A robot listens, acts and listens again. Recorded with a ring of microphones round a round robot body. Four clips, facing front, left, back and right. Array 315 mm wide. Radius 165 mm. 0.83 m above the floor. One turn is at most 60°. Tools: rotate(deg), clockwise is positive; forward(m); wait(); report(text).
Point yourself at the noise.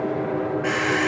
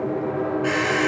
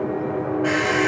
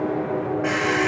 rotate(20)
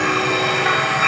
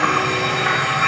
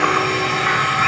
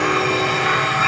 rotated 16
report("Facing the alarm clock, 2 to 4 m away.")